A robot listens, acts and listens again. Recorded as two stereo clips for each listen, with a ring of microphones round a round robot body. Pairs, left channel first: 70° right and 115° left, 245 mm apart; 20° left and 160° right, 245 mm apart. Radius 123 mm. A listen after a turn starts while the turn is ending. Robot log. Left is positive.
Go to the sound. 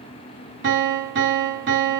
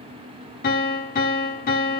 note: The piano: 75° left.
cmd yaw +75
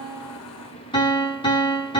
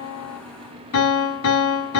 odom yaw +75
cmd fwd 1.0
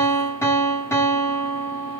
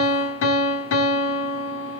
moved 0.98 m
note: The piano is now 10° left.
cmd yaw +10
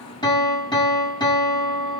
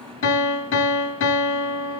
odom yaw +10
cmd fwd 1.0
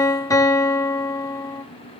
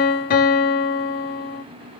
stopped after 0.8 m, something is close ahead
end: I am next to the piano.